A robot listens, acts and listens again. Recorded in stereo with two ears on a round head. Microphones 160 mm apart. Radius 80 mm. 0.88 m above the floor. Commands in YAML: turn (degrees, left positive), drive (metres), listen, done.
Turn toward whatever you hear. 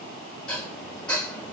turn: 30
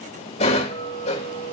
turn: 145
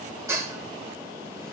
turn: -15
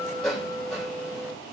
done: "Found it: dishes clattering, straight ahead, 2 to 4 m away."